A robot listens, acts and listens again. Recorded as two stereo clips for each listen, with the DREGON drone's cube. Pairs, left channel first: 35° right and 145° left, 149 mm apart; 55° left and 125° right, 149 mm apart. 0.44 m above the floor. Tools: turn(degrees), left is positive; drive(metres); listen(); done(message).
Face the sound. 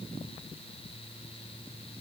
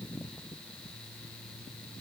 listen()
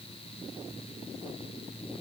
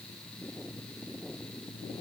listen()
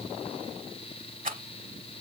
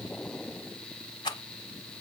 turn(degrees=115)
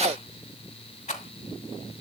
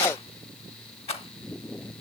turn(degrees=10)
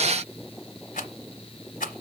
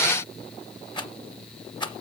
done("Found it: a rattle, straight ahead, 1 to 2 m away.")